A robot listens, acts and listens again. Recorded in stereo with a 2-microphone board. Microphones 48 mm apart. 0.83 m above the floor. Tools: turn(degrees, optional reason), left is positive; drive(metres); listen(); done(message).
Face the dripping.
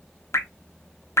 turn(degrees=90)
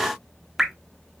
done("Facing the dripping.")